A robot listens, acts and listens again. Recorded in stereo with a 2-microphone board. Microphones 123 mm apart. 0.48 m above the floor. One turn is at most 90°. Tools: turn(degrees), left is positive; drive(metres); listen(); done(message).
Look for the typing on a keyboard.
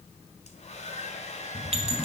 turn(degrees=30)
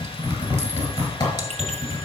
turn(degrees=90)
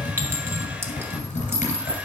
turn(degrees=80)
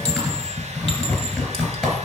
done("Facing the typing on a keyboard, 2 to 4 m away.")